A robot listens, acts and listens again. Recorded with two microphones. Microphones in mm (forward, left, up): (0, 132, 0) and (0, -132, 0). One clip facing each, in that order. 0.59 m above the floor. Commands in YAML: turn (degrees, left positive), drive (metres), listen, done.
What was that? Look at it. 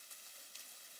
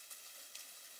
listen: true
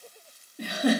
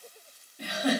turn: 55
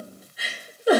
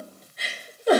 turn: 10
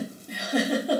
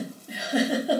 done: "Found it: a giggle, straight ahead, 1 to 2 m away."